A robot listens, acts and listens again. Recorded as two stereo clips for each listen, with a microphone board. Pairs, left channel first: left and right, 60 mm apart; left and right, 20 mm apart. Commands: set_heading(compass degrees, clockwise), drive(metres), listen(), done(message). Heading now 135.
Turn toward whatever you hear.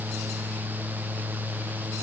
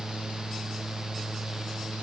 listen()
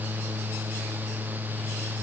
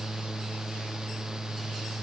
listen()
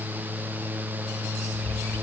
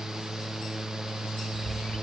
set_heading(60)
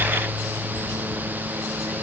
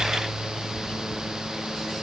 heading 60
set_heading(30)
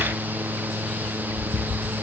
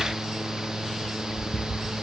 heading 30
set_heading(40)
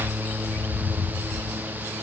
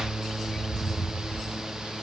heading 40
done("Found it: a bird, straight ahead.")